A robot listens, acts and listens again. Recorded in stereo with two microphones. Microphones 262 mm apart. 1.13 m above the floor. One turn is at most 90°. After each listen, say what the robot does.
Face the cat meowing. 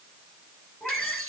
Turn 30° left.
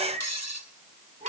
Turn 30° right.
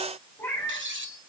Turn 10° left.
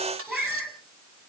Found it: a cat meowing, straight ahead, over 4 m away.